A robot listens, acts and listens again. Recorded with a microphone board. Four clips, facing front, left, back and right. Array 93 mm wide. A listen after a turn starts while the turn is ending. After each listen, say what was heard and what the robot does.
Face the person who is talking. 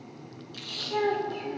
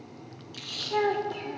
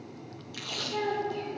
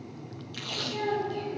The child speaking: 65° left. Turn 65° left.
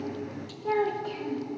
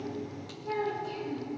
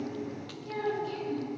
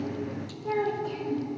The child speaking is now 15° right. Turn 15° right.
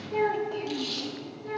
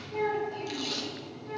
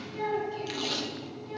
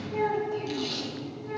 The child speaking is now 10° right. Turn 10° right.
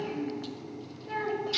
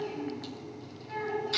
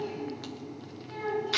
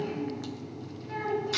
Facing the child speaking, over 4 m away.